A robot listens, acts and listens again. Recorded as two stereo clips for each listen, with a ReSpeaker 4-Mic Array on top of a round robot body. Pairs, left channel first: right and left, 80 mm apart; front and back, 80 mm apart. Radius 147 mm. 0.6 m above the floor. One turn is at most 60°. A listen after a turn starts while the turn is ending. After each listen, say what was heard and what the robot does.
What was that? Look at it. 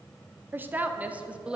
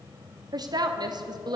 The woman speaking: 170° left. Turn 60° left.
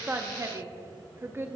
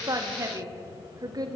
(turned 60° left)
The woman speaking is now 150° left. Turn 60° left.
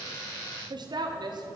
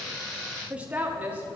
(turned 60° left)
The woman speaking is now 110° left. Turn 60° left.
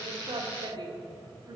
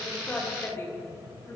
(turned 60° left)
The woman speaking is now 55° left. Turn 55° left.
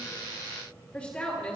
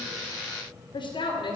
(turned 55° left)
The woman speaking is now 15° right. Turn 15° right.
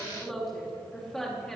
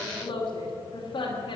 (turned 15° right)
Facing the woman speaking, 2 to 4 m away.